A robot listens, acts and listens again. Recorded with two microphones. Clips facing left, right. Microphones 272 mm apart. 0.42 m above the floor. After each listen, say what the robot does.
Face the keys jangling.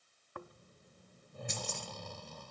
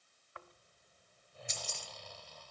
Turn 60° left.
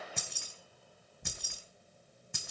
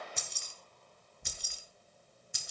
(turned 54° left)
Turn 65° left.
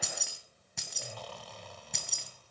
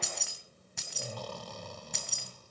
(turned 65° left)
Found it: keys jangling, straight ahead, 2 to 4 m away.